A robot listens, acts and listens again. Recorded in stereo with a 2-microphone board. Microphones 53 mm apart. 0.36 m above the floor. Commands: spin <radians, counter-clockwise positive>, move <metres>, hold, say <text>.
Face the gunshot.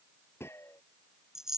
spin 1.05
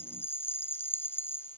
hold
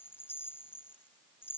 say I heard a gunshot, but can't make it out now. It was about straight ahead or 60° left.